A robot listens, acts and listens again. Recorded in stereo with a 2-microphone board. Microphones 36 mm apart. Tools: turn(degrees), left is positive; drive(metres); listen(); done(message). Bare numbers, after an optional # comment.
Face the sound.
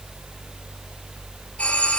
# The doorbell: about 35° left or 145° left.
turn(35)
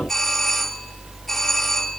done("Found it: a doorbell, straight ahead.")